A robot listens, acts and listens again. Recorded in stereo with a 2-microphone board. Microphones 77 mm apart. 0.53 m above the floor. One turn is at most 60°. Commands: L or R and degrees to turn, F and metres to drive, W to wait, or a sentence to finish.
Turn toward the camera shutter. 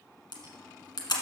L60
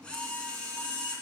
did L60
L15
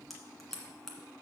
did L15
Found it: a camera shutter, straight ahead.